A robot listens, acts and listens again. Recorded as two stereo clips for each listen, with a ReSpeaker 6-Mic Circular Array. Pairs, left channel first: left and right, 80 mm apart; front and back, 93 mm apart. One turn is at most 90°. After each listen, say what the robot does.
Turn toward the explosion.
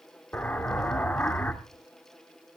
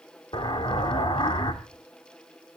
Turn 20° left.
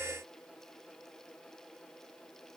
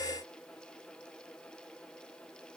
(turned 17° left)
I heard an explosion from this way, but can't make it out now.